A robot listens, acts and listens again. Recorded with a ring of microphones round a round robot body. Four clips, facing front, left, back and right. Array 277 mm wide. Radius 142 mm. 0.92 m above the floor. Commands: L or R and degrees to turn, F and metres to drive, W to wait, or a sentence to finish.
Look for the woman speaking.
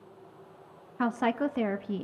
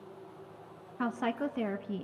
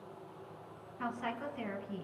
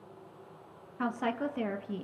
Found it: a woman speaking, straight ahead.